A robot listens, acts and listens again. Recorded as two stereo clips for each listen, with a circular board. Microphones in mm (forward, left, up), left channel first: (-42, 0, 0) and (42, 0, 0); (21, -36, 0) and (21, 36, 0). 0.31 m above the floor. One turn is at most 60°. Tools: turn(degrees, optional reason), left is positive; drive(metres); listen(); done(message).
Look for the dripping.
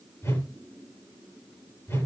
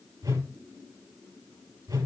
listen()
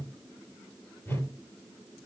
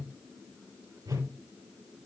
listen()
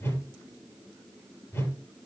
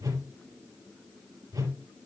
done("I can't make out dripping, only a whoosh.")